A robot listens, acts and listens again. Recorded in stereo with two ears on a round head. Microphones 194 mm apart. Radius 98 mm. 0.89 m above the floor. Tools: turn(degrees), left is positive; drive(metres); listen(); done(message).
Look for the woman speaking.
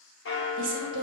turn(degrees=-55)
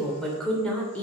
done("Facing the woman speaking, 2 to 4 m away.")